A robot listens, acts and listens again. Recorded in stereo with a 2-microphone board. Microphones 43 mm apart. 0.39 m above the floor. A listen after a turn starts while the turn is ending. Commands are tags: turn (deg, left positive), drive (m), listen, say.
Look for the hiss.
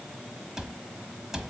<listen/>
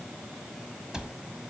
<listen/>
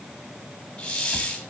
<turn deg="20"/>
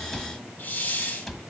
<turn deg="135"/>
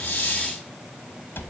<listen/>
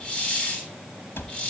<turn deg="30"/>
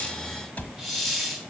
<say>Facing the hiss, 2 to 4 m away.</say>